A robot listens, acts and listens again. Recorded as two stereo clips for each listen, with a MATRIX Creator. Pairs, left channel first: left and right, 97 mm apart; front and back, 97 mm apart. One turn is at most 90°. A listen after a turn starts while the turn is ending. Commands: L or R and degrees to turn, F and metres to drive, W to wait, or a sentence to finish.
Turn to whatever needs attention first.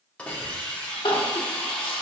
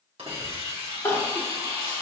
L65
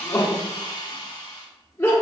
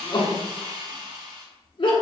L25
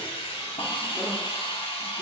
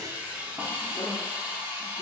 W
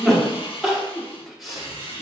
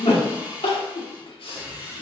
Found it: crying, straight ahead, 1 to 2 m away.